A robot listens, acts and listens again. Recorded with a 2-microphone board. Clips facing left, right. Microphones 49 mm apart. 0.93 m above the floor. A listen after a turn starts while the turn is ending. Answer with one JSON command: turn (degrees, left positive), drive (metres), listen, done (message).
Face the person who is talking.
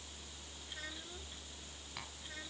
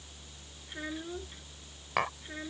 {"turn": -20}
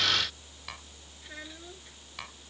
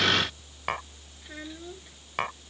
{"done": "Facing the child speaking."}